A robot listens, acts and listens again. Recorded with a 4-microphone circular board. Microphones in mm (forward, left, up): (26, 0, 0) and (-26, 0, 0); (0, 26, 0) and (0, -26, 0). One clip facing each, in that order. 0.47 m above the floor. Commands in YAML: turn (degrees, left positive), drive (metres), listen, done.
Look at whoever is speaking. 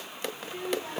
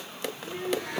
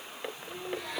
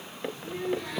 turn: -125
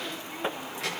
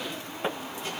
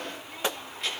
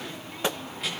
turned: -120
done: "Found it: a child speaking, straight ahead, over 4 m away."